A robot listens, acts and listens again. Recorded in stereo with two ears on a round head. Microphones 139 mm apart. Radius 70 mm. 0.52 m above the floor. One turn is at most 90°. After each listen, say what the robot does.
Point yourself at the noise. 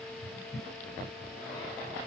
Keep listening.
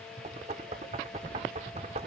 Turn 40° right.
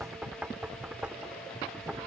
Turn 10° right.
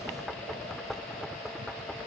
Found it: knocking, straight ahead.